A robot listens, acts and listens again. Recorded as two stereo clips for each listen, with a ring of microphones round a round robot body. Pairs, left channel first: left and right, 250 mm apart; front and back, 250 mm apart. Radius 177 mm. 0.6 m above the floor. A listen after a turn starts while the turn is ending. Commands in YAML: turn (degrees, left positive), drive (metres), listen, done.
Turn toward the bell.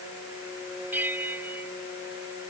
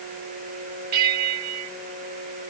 turn: -175
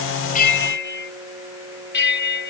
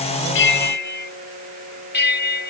turn: 45
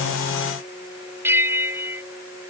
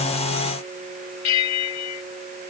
turn: -10
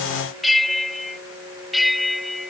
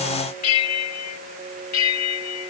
done: "Found it: a bell, straight ahead."